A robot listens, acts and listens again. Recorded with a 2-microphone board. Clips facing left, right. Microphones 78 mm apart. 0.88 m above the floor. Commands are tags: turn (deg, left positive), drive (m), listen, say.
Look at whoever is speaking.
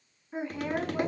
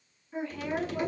<turn deg="20"/>
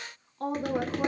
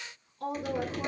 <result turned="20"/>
<turn deg="135"/>
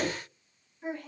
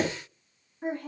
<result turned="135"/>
<turn deg="-55"/>
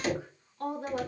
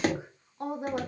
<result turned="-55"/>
<turn deg="-20"/>
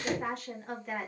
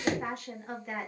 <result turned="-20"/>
<say>Facing the woman speaking, 1 to 2 m away.</say>